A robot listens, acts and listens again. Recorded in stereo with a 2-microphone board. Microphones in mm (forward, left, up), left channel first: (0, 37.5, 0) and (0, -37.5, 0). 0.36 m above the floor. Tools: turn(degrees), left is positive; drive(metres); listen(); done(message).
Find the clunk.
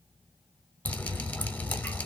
listen()
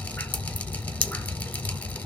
listen()
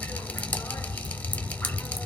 done("I can't make out a clunk, only dripping.")